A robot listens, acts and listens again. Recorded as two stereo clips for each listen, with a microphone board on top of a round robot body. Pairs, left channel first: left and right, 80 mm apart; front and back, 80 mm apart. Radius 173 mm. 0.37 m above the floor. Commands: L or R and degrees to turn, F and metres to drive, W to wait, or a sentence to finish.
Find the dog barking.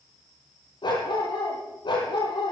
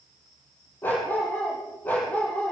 L70
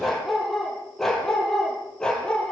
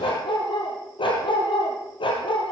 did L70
L10
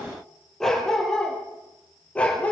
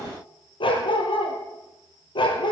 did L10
L15
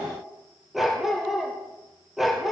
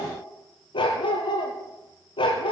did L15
Facing the dog barking.